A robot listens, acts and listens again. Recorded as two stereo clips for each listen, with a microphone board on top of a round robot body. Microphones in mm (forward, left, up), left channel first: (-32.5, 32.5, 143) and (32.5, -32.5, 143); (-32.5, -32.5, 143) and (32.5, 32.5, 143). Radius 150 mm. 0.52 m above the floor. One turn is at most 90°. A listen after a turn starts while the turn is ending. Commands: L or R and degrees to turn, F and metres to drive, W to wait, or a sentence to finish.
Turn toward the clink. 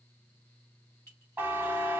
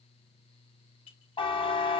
R90
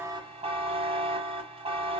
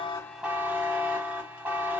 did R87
R75
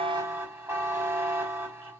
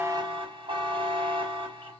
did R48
R25
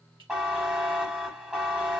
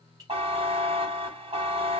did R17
R10
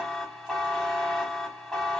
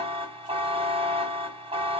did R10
W
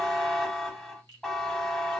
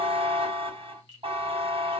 Found it: a clink, straight ahead.